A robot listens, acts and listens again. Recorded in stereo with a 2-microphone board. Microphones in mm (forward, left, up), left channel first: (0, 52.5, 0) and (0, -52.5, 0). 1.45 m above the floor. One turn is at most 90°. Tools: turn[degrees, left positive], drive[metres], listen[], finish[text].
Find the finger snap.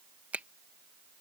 Action: turn[-30]
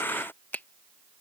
Thought: So it is at 20° left.
Action: turn[20]
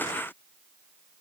Action: listen[]
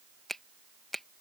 Action: finish[Found it: a finger snap, straight ahead.]